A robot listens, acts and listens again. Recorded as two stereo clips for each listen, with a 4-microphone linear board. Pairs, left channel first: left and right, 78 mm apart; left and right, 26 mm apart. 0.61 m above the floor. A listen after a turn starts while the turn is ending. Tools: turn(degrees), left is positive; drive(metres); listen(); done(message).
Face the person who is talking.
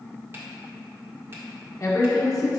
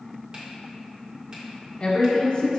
turn(degrees=45)
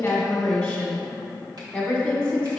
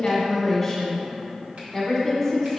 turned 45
turn(degrees=15)
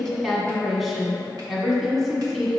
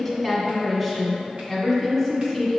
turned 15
done("Facing the woman speaking.")